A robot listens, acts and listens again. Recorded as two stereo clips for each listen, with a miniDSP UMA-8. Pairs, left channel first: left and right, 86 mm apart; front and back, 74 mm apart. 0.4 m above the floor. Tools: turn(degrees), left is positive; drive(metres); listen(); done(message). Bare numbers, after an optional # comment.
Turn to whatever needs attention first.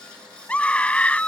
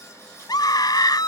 # The scream: 15° left.
turn(15)
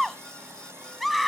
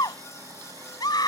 done("Found it: a scream, straight ahead.")